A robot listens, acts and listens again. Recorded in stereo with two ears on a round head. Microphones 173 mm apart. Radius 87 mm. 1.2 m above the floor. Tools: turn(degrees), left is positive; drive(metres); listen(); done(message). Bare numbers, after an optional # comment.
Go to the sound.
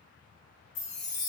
turn(90)
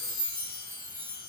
# So it is at 15° left.
turn(15)
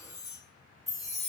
drive(1.0)
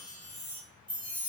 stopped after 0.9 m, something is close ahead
done("I am next to the chime.")